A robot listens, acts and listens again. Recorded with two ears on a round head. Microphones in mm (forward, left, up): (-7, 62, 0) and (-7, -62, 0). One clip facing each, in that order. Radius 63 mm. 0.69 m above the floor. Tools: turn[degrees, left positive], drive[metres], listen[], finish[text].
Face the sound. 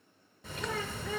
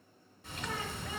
Thought: The bird: about 65° left or 115° left.
Action: turn[65]
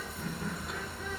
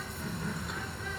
Action: finish[Facing the bird.]